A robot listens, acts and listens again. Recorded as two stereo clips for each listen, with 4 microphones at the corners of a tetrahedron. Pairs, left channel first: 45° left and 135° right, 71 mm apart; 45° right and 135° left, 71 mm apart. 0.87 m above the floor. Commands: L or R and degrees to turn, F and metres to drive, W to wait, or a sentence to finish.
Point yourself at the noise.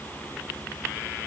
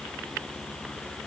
W
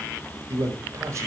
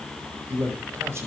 L180
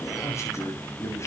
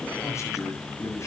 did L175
Found it: a man speaking, straight ahead, over 4 m away.